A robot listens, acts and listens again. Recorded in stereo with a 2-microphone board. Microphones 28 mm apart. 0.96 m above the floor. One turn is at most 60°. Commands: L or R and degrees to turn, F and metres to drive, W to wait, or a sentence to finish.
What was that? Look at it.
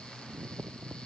W
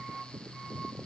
W
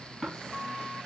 L15
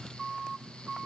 W
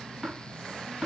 Facing the tapping.